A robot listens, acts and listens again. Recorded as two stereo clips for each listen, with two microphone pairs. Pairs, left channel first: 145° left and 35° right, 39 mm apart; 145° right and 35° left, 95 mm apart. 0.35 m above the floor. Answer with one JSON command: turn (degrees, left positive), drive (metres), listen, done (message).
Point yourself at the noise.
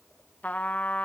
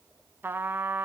{"turn": 100}
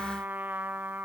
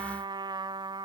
{"done": "Facing the trumpet."}